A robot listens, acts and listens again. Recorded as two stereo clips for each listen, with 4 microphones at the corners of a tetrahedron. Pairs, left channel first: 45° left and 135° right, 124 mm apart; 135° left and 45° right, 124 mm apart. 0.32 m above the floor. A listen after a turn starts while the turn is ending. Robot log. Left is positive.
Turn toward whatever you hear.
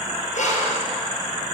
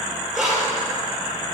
note: The breathing: 45° left.
cmd yaw +45
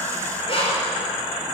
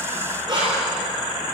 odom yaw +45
note: The breathing is now 10° left.
cmd yaw +10
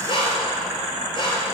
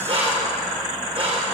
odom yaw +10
end: Facing the breathing.